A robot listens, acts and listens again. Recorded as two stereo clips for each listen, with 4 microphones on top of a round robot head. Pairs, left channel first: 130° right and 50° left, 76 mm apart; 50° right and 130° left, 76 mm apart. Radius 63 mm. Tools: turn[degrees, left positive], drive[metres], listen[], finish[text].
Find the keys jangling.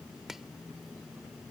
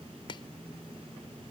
Action: listen[]
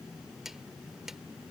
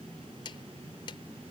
Action: listen[]
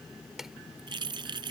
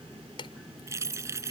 Thought: The keys jangling: 75° left.
Action: turn[75]
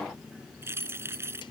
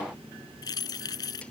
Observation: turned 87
Thought: The keys jangling is now 10° right.
Action: turn[-10]
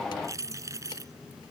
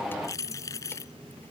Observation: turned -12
Action: finish[Facing the keys jangling.]